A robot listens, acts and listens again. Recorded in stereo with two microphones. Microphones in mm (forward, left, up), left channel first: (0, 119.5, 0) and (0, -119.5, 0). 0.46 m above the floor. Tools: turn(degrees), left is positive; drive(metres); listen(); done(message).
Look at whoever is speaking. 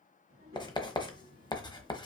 turn(degrees=-65)
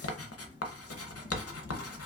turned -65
listen()
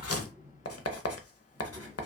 turn(degrees=-15)
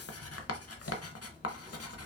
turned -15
listen()
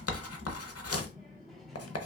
done("Found it: a child speaking, straight ahead.")